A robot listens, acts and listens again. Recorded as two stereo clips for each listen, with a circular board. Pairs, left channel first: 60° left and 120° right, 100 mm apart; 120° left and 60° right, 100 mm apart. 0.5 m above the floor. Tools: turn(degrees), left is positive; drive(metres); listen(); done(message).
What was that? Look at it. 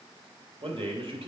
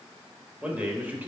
turn(degrees=-130)
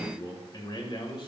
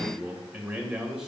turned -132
turn(degrees=25)
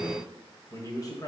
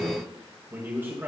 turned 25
turn(degrees=10)
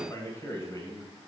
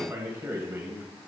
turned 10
done("Found it: a man speaking, straight ahead, 2 to 4 m away.")